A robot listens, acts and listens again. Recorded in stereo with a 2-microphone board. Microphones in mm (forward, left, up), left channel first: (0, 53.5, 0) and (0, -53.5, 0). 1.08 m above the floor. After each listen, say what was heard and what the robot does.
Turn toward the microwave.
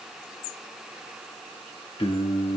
Keep listening.
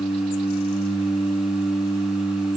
Keep listening.
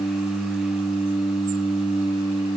I can't make out a microwave to turn to.